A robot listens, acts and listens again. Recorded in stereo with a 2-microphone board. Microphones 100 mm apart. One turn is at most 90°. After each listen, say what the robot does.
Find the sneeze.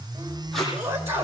Turn 30° right.
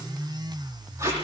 Keep listening.
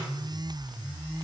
I heard a sneeze, but can't make it out now. It was about straight ahead or 120° right.